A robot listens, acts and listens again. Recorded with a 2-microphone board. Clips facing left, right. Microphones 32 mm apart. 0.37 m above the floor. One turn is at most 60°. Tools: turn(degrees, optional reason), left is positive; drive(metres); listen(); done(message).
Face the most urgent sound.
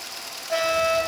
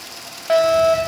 turn(degrees=-55, reason="The fire alarm: about 55° right or 125° right.")
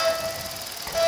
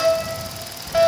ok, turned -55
turn(degrees=-40, reason="So it is at 40° right.")
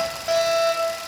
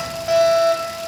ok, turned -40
done("Found it: a fire alarm, straight ahead, 2 to 4 m away.")